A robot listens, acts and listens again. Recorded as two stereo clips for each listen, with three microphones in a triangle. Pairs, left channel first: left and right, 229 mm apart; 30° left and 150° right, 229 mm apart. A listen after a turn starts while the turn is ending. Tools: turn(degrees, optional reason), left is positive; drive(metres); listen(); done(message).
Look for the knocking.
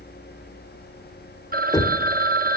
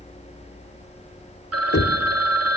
turn(degrees=15, reason="The knocking: 15° left.")
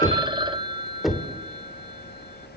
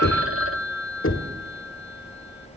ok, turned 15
done("Facing the knocking.")